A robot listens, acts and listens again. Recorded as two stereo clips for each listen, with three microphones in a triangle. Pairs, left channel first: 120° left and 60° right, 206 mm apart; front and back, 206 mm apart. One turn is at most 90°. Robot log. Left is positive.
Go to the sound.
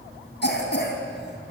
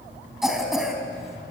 note: The cough: 90° left.
cmd yaw +90
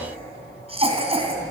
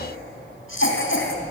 cmd fwd 1.0
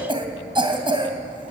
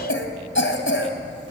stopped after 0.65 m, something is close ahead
end: Something is in my way. I am facing the cough but have not reached it.